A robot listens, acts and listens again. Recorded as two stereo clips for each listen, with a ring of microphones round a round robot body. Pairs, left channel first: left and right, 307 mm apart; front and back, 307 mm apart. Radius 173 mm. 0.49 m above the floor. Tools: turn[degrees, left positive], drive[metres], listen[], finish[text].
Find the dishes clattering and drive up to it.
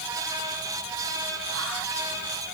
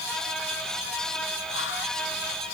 Action: listen[]
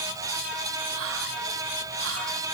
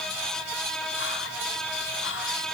Action: listen[]
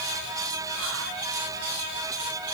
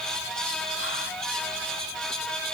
Action: finish[I can't make out dishes clattering to turn to.]